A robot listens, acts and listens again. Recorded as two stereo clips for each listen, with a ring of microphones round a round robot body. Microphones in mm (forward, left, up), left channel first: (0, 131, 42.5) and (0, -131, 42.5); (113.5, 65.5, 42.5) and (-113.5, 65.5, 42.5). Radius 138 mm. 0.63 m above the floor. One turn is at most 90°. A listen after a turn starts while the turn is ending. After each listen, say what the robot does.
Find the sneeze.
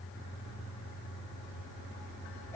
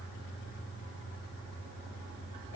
Keep listening.
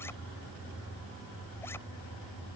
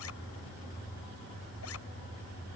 Keep listening.
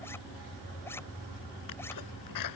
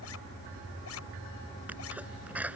Turn 90° left.
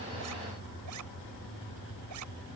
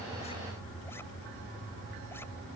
Facing where the sneeze came from. I can't hear it now.